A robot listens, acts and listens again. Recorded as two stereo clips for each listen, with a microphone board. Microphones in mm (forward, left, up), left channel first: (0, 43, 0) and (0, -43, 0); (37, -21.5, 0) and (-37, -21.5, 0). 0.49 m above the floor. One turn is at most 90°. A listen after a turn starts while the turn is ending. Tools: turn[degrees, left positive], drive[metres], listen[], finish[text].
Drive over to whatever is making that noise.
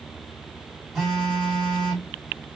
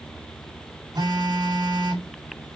Thought: The phone buzzing: straight behind.
Action: turn[90]
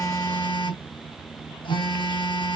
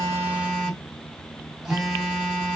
Thought: The phone buzzing is now 90° left.
Action: turn[90]
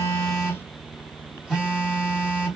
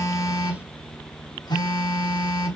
Thought: The phone buzzing is now 10° right.
Action: turn[-10]
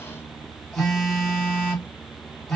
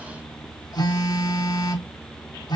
Action: drive[1.0]
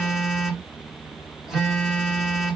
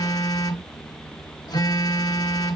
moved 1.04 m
Action: drive[1.0]
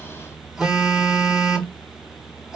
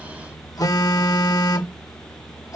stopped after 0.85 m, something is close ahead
Action: finish[I am next to the phone buzzing.]